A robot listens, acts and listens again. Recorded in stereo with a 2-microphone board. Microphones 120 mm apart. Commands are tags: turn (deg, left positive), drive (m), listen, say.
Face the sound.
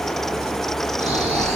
<turn deg="-60"/>
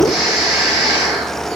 <say>Found it: snoring, straight ahead, over 4 m away.</say>